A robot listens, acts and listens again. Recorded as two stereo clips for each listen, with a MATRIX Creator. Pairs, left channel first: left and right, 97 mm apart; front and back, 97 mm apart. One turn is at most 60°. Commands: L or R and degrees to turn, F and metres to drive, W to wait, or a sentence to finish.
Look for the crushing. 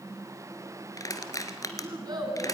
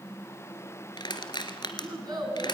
L35
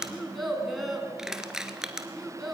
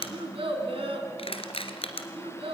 Found it: crushing, straight ahead.